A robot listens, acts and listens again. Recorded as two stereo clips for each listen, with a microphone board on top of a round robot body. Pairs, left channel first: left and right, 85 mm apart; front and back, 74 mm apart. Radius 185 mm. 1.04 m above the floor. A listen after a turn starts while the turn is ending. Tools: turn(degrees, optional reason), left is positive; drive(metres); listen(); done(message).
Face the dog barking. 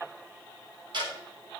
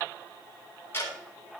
listen()
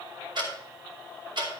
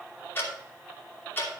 listen()
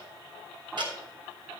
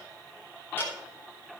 done("I can't make out a dog barking, only ticking.")